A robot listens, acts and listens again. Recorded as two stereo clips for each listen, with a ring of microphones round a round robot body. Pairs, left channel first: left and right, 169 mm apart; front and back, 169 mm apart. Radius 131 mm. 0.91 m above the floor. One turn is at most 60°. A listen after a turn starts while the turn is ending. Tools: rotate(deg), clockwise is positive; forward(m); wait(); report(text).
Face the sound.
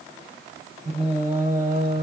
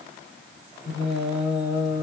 rotate(60)
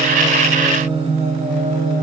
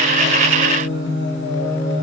rotate(50)
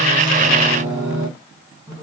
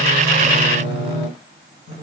rotate(25)
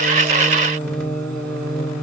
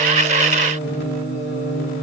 report("Found it: singing, straight ahead, 2 to 4 m away.")